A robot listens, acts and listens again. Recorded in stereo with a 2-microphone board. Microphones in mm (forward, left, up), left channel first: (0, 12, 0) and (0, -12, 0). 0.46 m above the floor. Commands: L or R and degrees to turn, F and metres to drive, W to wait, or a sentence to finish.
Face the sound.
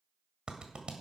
R40
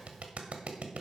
R95
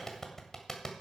L20
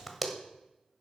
Found it: a clap, straight ahead, 1 to 2 m away.